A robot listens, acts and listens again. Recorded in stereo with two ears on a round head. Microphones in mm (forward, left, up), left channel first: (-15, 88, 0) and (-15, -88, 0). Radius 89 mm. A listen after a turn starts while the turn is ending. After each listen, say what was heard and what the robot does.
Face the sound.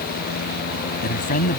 The man speaking: about 45° left or 135° left. Turn 45° left.
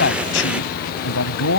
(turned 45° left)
So it is at 100° left. Turn 100° left.
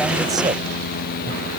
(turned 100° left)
Keep listening.
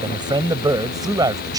The man speaking is now 20° right. Turn 20° right.
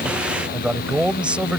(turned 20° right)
Facing the man speaking.